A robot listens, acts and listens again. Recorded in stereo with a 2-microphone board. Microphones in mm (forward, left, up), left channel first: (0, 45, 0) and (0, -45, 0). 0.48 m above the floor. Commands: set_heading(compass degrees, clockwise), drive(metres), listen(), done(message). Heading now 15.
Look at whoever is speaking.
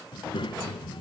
set_heading(315)
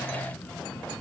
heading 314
done("Found it: a child speaking, straight ahead, 1 to 2 m away.")